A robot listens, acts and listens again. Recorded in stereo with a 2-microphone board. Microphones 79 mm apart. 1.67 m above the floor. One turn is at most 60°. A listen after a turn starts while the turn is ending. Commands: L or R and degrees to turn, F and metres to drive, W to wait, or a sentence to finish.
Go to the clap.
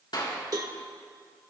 L60
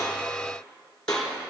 W
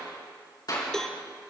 L55
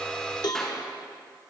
F1.0
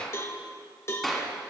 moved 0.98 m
F1.0
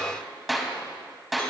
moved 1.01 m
F1.0
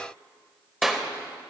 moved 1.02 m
F1.0
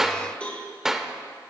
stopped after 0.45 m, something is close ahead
Arrived at the clap, straight ahead.